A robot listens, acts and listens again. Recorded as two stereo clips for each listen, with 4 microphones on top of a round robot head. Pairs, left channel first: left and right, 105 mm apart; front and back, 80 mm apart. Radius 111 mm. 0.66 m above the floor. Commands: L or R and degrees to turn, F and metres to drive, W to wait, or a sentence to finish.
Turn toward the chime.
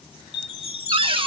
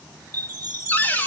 L60
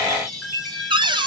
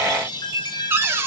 Facing the chime.